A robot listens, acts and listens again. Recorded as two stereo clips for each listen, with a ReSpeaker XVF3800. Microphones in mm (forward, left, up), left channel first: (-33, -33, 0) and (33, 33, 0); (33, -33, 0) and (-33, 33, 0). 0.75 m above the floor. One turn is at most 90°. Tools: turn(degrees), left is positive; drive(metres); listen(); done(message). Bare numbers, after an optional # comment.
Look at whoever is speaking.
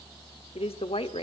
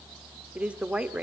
# The woman speaking: 150° right.
turn(-90)
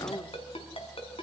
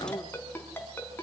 # Nothing new. It was at 60° right.
turn(-60)
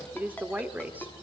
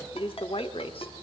# The woman speaking is now 30° right.
turn(-30)
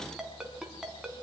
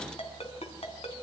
listen()
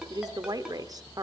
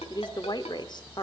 done("Facing the woman speaking, 1 to 2 m away.")